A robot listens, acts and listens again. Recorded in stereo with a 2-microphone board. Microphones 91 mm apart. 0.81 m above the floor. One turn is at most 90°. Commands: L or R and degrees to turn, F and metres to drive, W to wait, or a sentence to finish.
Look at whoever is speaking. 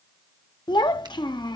L60
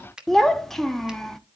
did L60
Facing the child speaking, under 1 m away.